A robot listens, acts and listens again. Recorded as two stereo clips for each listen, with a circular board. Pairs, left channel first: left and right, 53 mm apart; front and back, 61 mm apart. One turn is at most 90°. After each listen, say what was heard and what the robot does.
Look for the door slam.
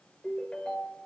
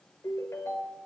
Keep listening.
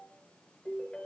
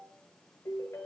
Keep listening.
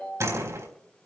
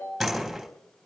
The door slam: 90° right. Turn 90° right.
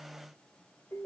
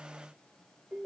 I heard a door slam from this way, but can't make it out now.